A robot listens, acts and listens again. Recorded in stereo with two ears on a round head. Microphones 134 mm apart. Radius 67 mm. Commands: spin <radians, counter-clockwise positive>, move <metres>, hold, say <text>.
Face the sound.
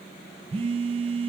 spin -0.70
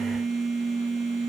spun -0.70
say Facing the phone buzzing.